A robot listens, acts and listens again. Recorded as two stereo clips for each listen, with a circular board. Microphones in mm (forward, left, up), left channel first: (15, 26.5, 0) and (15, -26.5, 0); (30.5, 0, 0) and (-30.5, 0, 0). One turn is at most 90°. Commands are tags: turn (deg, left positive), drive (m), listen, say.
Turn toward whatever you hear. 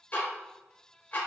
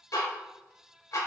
<turn deg="30"/>
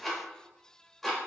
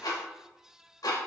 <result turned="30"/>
<say>Facing the ticking, under 1 m away.</say>